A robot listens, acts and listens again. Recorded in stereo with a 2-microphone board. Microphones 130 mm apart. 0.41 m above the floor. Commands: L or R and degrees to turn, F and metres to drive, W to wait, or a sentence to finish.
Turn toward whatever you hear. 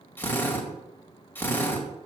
L15
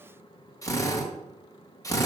L155
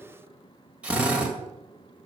R10
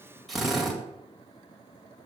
Facing the drill, 1 to 2 m away.